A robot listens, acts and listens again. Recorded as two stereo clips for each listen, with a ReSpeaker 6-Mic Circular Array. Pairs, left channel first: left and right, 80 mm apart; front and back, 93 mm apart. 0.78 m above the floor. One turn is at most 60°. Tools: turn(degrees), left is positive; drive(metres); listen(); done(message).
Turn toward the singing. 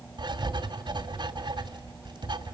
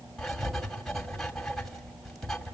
listen()
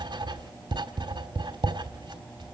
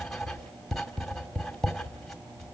listen()
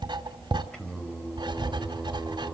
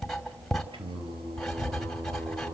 turn(degrees=60)
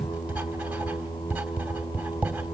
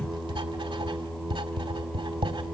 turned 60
turn(degrees=60)
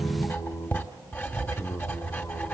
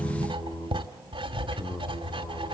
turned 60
turn(degrees=45)
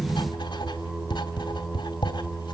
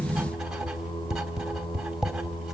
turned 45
turn(degrees=-15)
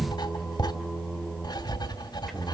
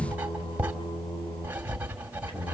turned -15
done("Found it: singing, straight ahead, 2 to 4 m away.")